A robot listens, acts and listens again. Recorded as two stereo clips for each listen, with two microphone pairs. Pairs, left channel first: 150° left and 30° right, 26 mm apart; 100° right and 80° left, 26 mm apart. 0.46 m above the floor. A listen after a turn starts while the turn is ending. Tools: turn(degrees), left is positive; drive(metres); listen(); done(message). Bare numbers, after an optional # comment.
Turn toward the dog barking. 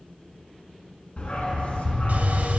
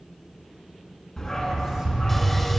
# The dog barking: 170° right.
turn(-170)
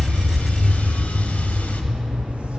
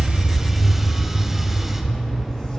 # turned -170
done("Found it: a dog barking, straight ahead, 2 to 4 m away.")